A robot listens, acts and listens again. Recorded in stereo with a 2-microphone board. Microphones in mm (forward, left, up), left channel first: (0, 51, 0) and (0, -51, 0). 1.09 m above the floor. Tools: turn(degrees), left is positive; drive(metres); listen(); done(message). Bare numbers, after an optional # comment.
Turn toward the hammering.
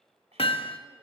# The hammering: about 65° left or 115° left.
turn(65)
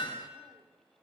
# So it is at 50° left.
turn(50)
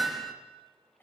done("Facing the hammering.")